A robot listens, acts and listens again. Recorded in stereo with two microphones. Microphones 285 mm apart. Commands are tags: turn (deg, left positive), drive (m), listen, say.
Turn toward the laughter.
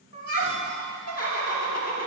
<turn deg="60"/>
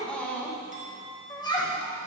<turn deg="20"/>
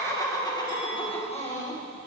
<turn deg="25"/>
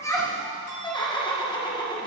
<turn deg="15"/>
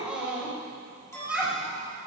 <say>Facing the laughter, 1 to 2 m away.</say>